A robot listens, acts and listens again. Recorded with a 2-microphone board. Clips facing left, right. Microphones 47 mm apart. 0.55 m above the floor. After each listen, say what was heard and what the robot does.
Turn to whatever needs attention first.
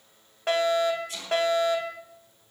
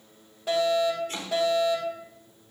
The fire alarm: about 55° left or 125° left. Turn 55° left.
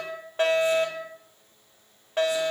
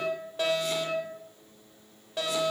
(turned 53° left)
So it is at 50° left. Turn 50° left.
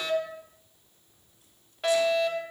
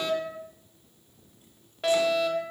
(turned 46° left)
Facing the fire alarm, 2 to 4 m away.